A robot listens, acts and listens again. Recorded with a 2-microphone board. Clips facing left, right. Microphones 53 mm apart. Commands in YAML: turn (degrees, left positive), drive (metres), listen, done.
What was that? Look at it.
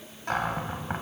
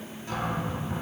turn: 60
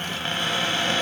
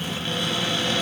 turn: 50
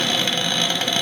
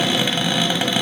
turn: -10
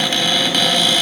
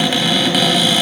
done: "Facing the cupboard door."